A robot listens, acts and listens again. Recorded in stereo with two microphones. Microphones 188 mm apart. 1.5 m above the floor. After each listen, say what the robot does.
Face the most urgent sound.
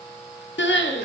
Turn 90° left.
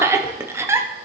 Turn 15° right.
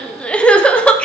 Facing the crying, under 1 m away.